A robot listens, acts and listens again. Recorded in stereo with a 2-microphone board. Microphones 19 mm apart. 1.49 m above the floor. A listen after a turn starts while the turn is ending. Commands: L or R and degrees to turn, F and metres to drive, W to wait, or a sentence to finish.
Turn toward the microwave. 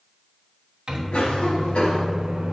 R35
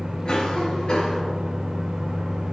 R105
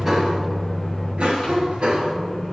L30
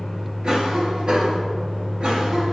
R15
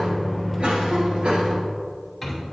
Found it: a microwave, straight ahead, 1 to 2 m away.